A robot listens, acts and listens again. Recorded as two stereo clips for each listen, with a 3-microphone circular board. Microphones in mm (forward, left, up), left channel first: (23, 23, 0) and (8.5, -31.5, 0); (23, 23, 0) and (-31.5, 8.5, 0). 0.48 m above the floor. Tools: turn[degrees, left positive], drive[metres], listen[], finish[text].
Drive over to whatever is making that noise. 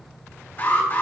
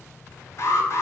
Thought: The alarm: 30° left.
Action: turn[30]
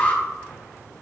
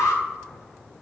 Thought: The alarm is now 15° left.
Action: turn[15]
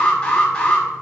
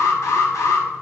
Action: drive[1.0]
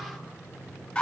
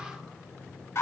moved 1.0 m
Thought: The alarm is now 10° left.
Action: turn[10]
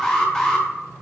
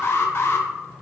Action: drive[1.0]
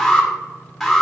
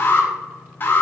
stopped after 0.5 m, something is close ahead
Thought: The alarm is now 10° right.
Action: turn[-10]
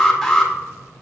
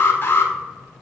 Action: finish[Arrived at the alarm, straight ahead.]